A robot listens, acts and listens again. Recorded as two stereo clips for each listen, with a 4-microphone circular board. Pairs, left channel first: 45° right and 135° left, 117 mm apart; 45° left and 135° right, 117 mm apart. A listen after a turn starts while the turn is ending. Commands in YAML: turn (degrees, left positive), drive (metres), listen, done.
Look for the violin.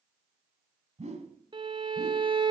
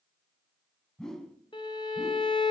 turn: 90
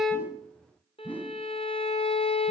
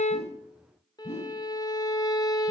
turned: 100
turn: -10
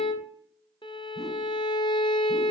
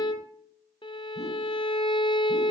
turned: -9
done: "Facing the violin."